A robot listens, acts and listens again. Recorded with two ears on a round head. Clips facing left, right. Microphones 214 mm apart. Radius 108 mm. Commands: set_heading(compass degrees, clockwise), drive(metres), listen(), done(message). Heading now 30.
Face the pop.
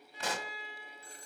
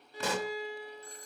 set_heading(100)
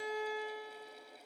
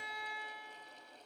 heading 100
listen()
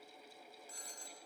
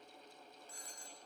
done("I heard a pop, but can't make it out now. It was about straight ahead or 40° right.")